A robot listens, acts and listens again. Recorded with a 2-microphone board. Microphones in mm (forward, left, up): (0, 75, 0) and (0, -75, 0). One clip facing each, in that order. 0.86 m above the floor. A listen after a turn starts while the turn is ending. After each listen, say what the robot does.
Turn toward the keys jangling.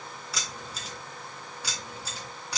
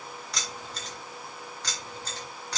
Turn 30° left.
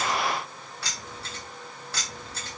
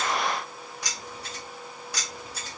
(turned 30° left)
Turn 15° right.
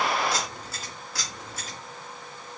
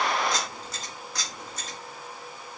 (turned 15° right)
Found it: keys jangling, straight ahead.